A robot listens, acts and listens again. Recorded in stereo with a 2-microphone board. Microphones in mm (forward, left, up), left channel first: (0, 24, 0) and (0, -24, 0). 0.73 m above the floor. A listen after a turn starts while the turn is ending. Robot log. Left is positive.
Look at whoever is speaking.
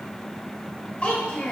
note: The child speaking: about 25° left or 155° left.
cmd yaw +25
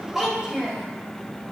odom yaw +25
note: So it is at 10° right.
cmd yaw -10
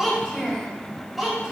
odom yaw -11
end: Found it: a child speaking, straight ahead, 2 to 4 m away.